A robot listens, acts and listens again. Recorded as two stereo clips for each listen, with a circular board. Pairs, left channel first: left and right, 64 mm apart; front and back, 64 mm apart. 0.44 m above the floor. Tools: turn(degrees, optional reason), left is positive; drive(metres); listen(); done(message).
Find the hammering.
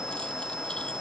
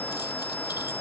listen()
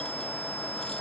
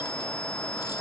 listen()
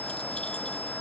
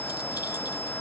done("I can't make out hammering to turn to.")